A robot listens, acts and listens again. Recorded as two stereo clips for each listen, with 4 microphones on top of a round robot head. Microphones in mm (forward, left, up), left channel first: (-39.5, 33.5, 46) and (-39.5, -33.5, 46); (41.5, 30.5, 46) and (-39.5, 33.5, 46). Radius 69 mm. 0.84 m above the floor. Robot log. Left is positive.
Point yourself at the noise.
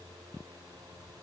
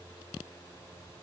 cmd idle
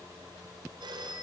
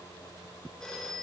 note: The phone ringing: 85° right.
cmd yaw -85
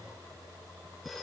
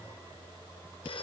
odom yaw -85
end: Found it: a phone ringing, straight ahead.